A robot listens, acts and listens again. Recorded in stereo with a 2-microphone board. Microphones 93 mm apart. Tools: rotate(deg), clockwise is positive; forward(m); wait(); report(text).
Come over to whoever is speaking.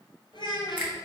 rotate(-55)
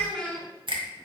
rotate(-10)
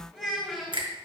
forward(1.0)
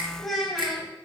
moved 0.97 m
forward(1.0)
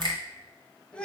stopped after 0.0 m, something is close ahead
rotate(-15)
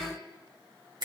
wait()
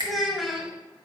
report("I am next to the child speaking.")